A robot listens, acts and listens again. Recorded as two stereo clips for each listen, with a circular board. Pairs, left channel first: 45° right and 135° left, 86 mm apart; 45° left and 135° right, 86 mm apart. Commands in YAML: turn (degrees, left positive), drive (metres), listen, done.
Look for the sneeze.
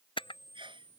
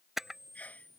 turn: 120
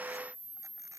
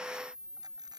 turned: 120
done: "I heard a sneeze from this way, but can't make it out now."